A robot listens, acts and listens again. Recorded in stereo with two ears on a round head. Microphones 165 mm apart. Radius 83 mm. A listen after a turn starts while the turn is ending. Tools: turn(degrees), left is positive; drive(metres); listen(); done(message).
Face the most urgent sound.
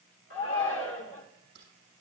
turn(degrees=75)
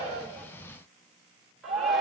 done("Facing the shout.")